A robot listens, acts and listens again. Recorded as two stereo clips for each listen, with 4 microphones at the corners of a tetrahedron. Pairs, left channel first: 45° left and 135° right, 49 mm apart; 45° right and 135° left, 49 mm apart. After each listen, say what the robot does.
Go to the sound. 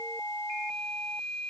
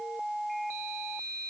Keep listening.
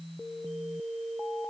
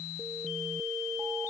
Keep listening.
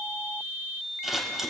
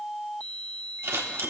Turn 145° left.
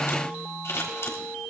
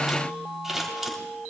Turn 55° left.
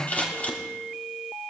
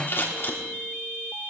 Turn 10° right.
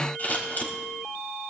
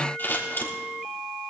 Drive 1.0 m forward.
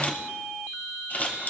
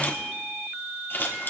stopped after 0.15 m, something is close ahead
Blocked. The scissors is further on, straight ahead.